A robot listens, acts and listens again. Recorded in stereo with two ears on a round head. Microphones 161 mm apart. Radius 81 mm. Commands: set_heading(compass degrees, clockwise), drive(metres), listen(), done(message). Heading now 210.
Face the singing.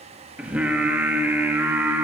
set_heading(240)
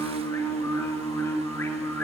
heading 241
set_heading(231)
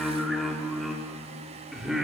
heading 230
done("Facing the singing.")